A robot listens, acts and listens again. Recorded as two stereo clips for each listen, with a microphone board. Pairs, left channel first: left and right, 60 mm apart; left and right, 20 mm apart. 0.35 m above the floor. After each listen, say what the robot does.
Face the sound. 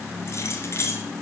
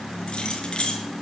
Turn 45° left.
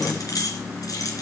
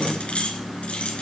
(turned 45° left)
Turn 75° left.
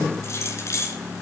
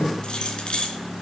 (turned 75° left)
Turn 55° left.
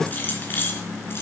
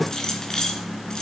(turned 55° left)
Turn 40° left.
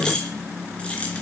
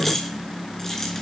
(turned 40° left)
Turn 20° left.
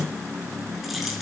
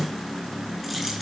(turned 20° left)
Keep listening.
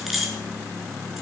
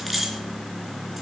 Found it: keys jangling, straight ahead.